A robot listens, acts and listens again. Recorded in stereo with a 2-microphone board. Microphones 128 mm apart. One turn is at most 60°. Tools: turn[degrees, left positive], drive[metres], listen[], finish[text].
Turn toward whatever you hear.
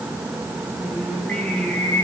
Action: turn[30]
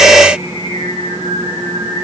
Thought: So it is at 135° left.
Action: turn[60]
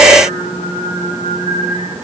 Thought: The singing is now 80° left.
Action: turn[60]
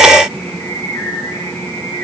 Thought: The singing is now 35° left.
Action: turn[35]
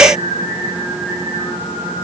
Thought: The singing is now 15° right.
Action: turn[-15]
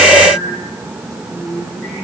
Action: finish[Facing the singing.]